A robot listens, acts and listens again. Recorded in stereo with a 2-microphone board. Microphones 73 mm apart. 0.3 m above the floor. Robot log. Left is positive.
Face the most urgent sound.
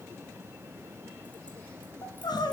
note: The crying: about 75° left or 105° left.
cmd yaw +75
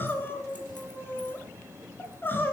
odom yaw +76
note: So it is at 30° left.
cmd yaw +30
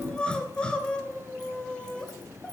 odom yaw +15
note: The crying is now 15° left.
cmd yaw +15
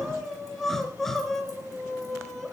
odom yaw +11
end: Facing the crying.